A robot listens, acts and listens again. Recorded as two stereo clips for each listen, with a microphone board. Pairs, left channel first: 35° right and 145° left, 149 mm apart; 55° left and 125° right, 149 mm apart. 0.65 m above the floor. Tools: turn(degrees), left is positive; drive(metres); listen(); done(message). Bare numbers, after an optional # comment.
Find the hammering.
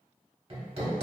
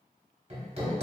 # The hammering: 165° right.
turn(-165)
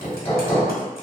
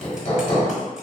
# The hammering is now 15° left.
turn(15)
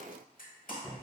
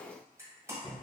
done("Found it: hammering, straight ahead.")